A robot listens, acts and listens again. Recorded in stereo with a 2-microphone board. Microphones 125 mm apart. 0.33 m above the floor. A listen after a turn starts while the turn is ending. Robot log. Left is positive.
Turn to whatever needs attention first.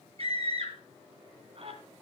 note: The scream: about 50° right or 130° right.
cmd yaw -50
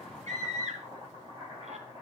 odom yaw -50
note: So it is at 75° right.
cmd yaw -75
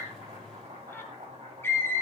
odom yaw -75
note: The scream is now 20° left.
cmd yaw +20
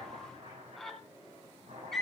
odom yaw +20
end: Found it: a scream, straight ahead, 2 to 4 m away.